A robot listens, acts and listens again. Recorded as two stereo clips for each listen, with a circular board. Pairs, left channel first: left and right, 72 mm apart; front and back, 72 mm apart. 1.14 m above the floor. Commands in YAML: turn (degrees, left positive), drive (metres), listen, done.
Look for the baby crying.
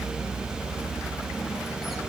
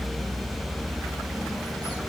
listen: true
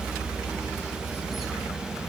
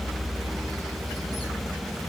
listen: true
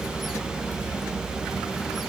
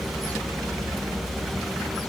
done: "I can't make out a baby crying."